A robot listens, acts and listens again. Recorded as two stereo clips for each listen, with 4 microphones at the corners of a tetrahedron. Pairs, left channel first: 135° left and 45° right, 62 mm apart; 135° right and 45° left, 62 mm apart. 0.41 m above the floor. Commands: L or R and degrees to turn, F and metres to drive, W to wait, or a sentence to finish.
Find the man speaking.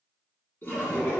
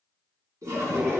W
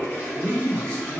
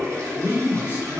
R155
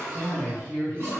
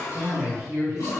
R35
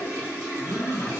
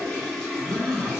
Found it: a man speaking, straight ahead.